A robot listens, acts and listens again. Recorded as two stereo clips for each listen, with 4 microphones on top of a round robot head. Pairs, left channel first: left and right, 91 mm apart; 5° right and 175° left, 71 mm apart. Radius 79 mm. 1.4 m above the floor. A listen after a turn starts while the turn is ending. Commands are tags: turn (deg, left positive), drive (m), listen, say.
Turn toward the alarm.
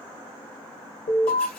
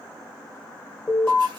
<turn deg="90"/>
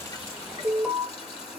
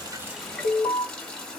<turn deg="-10"/>
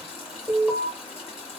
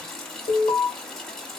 <say>Facing the alarm.</say>